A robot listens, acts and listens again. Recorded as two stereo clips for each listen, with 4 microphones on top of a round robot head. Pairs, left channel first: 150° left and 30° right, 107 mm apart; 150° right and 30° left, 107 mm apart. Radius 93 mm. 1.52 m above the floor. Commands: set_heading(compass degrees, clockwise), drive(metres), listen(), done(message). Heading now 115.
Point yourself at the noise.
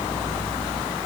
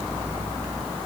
listen()
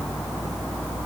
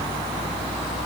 listen()
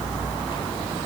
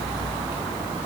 done("I can't make out anything to turn to.")